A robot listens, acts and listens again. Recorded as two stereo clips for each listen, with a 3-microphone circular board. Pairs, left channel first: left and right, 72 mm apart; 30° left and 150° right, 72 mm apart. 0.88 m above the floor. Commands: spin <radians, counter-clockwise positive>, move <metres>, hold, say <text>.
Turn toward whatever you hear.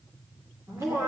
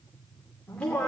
spin -0.87
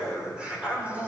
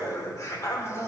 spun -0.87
spin -0.35
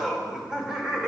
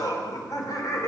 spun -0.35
spin -0.26
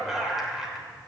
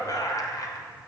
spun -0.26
say Facing the laughter, 2 to 4 m away.